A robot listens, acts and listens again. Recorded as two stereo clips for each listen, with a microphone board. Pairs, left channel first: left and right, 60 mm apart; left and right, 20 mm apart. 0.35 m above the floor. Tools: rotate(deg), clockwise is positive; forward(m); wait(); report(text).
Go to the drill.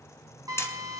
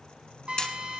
rotate(70)
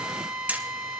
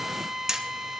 rotate(15)
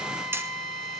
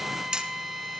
forward(1.0)
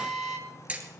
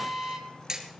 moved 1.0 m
forward(1.0)
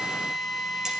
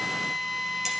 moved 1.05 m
forward(1.0)
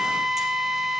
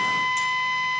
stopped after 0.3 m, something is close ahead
report("Arrived at the drill, straight ahead.")